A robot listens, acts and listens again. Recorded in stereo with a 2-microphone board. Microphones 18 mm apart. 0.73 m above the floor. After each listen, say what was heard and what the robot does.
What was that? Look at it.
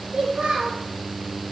The child speaking: about 50° right or 130° right. Turn 50° right.
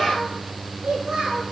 So it is at 80° right. Turn 80° right.
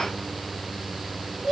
The child speaking is now 10° right. Turn 10° right.
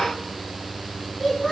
Facing the child speaking, over 4 m away.